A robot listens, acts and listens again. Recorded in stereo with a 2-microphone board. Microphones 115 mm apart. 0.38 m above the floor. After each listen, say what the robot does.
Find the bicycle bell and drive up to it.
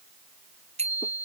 Turn 70° right.
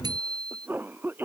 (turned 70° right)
Turn 35° right.
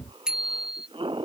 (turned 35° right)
Drive 1.0 m forward.
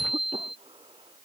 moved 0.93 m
Drive 1.0 m forward.
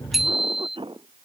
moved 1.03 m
Drive 1.0 m forward.
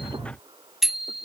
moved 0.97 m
Drive 1.0 m forward.
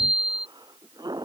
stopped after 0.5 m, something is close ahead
I am next to the bicycle bell.